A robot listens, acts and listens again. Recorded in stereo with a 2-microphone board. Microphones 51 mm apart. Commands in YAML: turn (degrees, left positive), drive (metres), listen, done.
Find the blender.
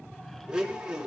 turn: -15
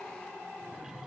listen: true
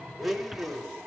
done: "Found it: a blender, straight ahead, 1 to 2 m away."